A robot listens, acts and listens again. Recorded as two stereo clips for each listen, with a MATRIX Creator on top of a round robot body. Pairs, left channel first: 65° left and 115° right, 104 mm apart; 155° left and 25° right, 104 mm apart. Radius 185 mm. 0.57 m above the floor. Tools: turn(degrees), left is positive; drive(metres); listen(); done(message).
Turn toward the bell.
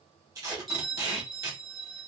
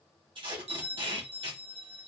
turn(degrees=-20)
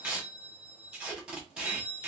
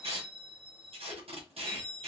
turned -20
done("Found it: a bell, straight ahead.")